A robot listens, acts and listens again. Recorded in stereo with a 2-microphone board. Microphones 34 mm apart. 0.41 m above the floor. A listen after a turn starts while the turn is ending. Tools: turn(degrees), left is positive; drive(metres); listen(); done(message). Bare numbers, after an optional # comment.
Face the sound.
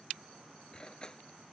# The cutlery clinking: about 25° left or 155° left.
turn(25)
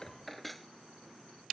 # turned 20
done("Found it: cutlery clinking, straight ahead.")